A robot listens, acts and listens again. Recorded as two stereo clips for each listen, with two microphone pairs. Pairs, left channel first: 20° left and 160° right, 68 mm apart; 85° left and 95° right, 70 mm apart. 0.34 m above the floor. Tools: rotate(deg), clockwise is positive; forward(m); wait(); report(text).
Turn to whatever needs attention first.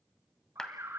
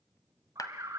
rotate(115)
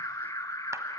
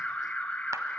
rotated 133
rotate(-15)
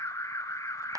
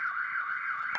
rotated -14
report("Found it: an alarm, straight ahead.")